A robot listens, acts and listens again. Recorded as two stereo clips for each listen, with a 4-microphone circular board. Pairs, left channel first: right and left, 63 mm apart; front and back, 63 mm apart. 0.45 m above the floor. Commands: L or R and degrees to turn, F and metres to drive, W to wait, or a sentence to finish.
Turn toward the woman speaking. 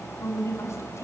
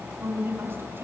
R130
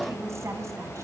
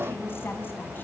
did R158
L25
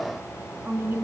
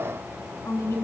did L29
L35
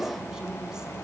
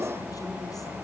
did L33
W
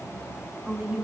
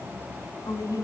L10
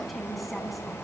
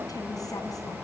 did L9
W
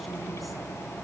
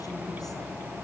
W
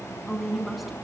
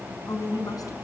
Facing the woman speaking, over 4 m away.